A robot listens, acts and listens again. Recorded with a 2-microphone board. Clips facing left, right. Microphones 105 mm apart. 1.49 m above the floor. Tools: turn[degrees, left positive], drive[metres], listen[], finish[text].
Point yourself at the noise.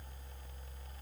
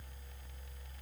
Action: listen[]
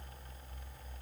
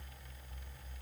Action: listen[]
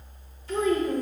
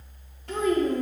Thought: The child speaking: about 55° right or 125° right.
Action: turn[-55]
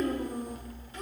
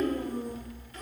Thought: So it is at 20° left.
Action: turn[20]
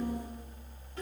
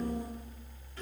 Thought: The child speaking is now 20° left.
Action: turn[20]
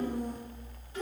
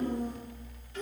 Thought: The child speaking is now 10° left.
Action: turn[10]
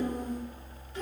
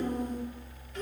Action: finish[Found it: a child speaking, straight ahead, 2 to 4 m away.]